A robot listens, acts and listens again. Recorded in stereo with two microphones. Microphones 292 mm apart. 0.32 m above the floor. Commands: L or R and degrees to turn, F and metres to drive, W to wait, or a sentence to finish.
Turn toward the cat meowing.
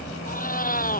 L30
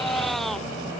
Found it: a cat meowing, straight ahead.